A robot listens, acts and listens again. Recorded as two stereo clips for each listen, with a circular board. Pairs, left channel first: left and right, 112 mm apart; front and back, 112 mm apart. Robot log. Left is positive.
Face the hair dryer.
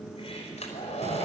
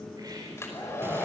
note: The hair dryer: 65° left.
cmd yaw +65
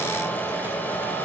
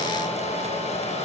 note: The hair dryer is now 15° left.
cmd yaw +15
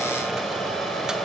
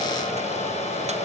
end: Facing the hair dryer, over 4 m away.